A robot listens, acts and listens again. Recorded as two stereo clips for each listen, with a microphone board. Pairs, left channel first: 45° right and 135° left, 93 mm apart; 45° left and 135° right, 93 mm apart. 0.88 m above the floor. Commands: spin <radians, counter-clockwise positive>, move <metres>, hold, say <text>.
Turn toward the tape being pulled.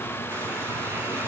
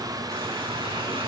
hold
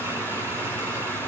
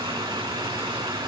hold
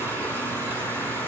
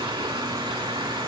say I can't make out tape being pulled.